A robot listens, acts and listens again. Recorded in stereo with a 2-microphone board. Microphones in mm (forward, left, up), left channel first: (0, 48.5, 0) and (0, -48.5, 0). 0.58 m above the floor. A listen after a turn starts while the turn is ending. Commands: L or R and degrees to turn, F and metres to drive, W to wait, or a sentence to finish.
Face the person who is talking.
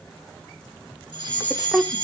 R30
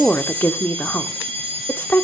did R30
L25
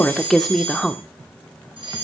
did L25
Facing the woman speaking.